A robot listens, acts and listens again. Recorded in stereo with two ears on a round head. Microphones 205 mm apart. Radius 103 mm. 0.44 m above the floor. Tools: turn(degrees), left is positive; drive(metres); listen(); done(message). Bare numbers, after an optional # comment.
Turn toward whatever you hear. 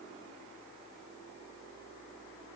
listen()
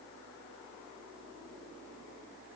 listen()
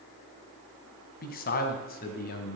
# The man speaking: about 40° left or 140° left.
turn(40)
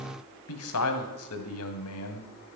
# So it is at 110° left.
turn(110)
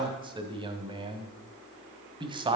# The man speaking is now 20° right.
turn(-20)
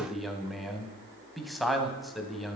done("Found it: a man speaking, straight ahead, 2 to 4 m away.")